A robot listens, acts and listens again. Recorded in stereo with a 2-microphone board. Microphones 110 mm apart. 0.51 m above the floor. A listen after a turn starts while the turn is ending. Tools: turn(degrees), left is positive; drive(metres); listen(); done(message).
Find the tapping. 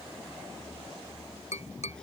turn(degrees=90)
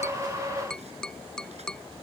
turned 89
done("Facing the tapping.")